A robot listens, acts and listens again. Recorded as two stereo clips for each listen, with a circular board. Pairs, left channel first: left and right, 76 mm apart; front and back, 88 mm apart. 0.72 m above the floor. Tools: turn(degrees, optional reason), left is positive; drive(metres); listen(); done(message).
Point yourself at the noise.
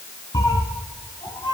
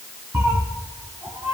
turn(degrees=125, reason="The cat meowing: 125° left.")
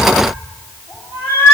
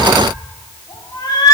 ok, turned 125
turn(degrees=35, reason="The cat meowing is now 35° left.")
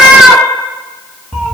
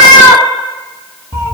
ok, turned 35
done("Facing the cat meowing.")